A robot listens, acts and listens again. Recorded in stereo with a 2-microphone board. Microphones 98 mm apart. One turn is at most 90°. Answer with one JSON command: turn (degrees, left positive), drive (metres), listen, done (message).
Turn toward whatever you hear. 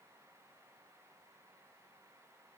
{"listen": true}
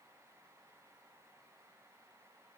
{"listen": true}
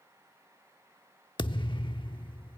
{"turn": 60}
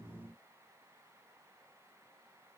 {"listen": true}
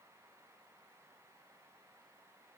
{"done": "I heard a thud, but can't make it out now. It was about straight ahead or 60° left."}